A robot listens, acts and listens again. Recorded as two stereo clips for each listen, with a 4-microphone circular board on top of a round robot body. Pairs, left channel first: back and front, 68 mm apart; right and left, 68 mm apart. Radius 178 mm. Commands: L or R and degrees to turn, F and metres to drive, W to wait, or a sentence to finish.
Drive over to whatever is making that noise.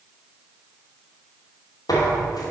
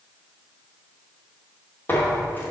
R155
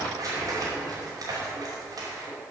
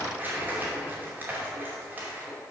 L25
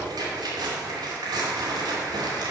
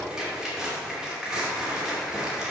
F1.0
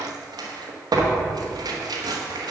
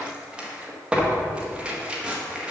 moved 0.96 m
L15
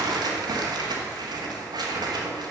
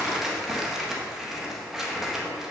F1.0
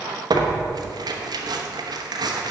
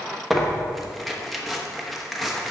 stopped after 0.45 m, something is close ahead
Arrived at the tearing paper, straight ahead.